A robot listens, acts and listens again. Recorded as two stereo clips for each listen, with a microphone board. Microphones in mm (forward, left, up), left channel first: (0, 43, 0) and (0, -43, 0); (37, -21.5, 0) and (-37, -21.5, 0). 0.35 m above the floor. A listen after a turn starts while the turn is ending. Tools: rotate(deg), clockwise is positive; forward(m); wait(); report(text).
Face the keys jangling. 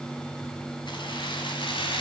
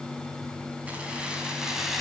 rotate(-95)
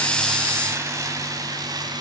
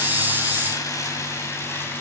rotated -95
rotate(55)
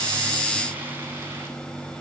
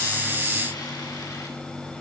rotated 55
wait()
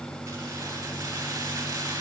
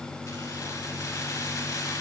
rotate(35)
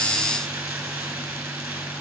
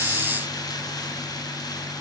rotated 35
rotate(15)
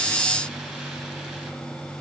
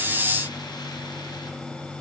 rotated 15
wait()
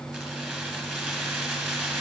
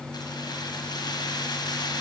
report("Facing the keys jangling.")